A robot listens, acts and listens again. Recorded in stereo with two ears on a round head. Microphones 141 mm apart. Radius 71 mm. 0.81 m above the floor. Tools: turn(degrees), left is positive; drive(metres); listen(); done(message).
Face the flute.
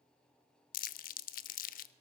listen()
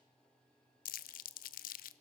listen()
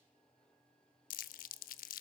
done("I can't make out a flute to turn to.")